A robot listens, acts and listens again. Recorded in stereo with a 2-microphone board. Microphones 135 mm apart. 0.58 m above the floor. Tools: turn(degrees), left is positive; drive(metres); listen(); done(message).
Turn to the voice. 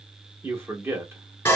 turn(degrees=-15)
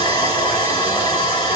listen()
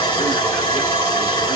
listen()
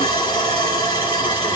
done("I heard a man speaking, but can't make it out now. It was about straight ahead or 150° right.")